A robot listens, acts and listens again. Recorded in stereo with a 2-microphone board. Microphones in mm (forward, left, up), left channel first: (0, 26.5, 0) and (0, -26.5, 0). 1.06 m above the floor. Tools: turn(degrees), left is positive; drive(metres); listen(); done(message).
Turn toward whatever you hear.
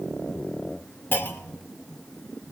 turn(degrees=40)
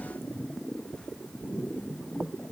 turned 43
listen()
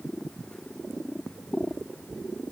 done("I heard a clunk, but can't make it out now. It was about straight ahead or 95° left.")